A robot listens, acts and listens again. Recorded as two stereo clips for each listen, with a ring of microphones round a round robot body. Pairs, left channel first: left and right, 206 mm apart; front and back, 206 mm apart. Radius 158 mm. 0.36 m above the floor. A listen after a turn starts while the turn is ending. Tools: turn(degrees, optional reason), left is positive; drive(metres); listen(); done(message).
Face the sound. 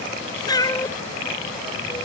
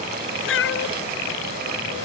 turn(degrees=15, reason="The cat meowing: 15° left.")
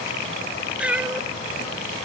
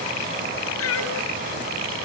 done("Facing the cat meowing.")